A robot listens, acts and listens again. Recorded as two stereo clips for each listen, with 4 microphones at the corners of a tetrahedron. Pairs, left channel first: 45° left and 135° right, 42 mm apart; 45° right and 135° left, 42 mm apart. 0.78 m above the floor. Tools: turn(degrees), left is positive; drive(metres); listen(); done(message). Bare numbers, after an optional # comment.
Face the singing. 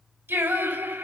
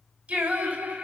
# The singing: 165° right.
turn(-165)
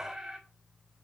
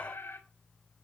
# The singing is now 55° right.
turn(-55)
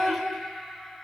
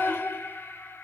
# The singing is now 40° right.
turn(-40)
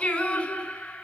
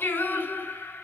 # The singing is now 15° right.
turn(-15)
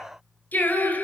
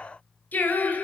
done("Facing the singing, over 4 m away.")